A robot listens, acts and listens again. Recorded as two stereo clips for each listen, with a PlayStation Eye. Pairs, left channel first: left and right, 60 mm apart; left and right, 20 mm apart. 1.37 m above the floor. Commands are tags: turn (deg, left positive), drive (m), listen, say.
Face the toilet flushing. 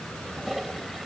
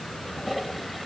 <turn deg="-30"/>
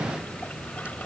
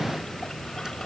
<listen/>
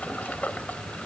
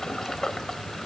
<turn deg="25"/>
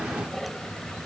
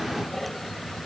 <say>Facing the toilet flushing.</say>